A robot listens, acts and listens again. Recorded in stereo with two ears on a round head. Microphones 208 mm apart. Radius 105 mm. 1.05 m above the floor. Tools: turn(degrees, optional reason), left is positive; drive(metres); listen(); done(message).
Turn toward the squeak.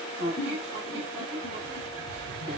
turn(degrees=-70, reason="The squeak: about 70° right or 110° right.")
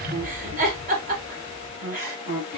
turn(degrees=-30, reason="So it is at 30° right.")
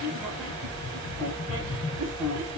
done("Found it: a squeak, straight ahead.")